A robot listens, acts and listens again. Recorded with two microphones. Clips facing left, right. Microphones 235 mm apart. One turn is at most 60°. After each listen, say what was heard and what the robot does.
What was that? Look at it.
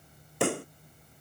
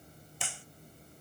The pop: about 65° left or 115° left. Turn 60° left.
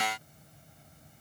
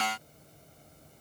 Keep listening.
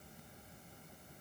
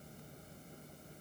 I heard a pop, but can't make it out now. It was about 5° left or 55° left.